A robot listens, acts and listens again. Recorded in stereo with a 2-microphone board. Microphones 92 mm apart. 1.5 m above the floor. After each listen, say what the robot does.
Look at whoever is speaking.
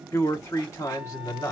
Turn 35° left.
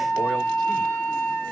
Keep listening.
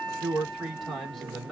Facing the man speaking, 2 to 4 m away.